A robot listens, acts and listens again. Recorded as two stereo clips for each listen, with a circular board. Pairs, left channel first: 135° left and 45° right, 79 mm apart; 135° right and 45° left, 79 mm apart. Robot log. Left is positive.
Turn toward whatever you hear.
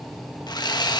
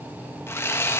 note: The sawing: 165° left.
cmd yaw +165
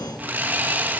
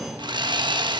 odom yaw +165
note: The sawing is now 25° left.
cmd yaw +25
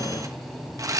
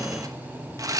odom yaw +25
end: Found it: sawing, straight ahead.